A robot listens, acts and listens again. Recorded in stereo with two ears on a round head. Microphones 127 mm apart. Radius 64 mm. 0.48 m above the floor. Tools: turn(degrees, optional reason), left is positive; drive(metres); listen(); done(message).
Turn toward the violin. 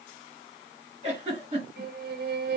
turn(degrees=-90)
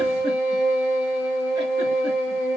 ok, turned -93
done("Facing the violin.")